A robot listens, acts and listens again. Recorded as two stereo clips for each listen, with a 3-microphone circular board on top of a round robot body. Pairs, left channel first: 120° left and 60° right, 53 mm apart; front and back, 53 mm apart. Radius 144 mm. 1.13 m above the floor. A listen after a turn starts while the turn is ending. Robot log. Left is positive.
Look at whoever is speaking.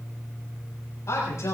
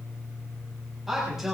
note: The man speaking: 95° left.
cmd yaw +95
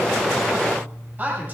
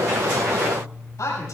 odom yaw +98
end: Found it: a man speaking, straight ahead.